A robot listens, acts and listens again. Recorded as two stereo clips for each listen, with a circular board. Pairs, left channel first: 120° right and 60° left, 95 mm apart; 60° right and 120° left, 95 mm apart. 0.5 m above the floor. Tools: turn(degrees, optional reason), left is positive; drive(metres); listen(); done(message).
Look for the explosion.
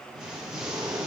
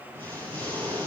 turn(degrees=140, reason="The explosion: 140° left.")
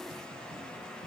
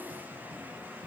done("Facing where the explosion came from. I can't hear it now.")